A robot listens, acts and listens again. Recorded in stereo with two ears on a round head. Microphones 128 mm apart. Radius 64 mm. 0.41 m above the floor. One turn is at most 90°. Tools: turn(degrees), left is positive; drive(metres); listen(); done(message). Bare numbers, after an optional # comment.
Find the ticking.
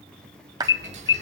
# The ticking: about 50° right or 130° right.
turn(-50)
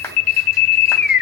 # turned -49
listen()
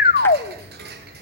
# So it is at 80° right.
turn(-80)
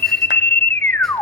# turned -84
listen()
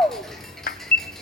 done("Facing the ticking, over 4 m away.")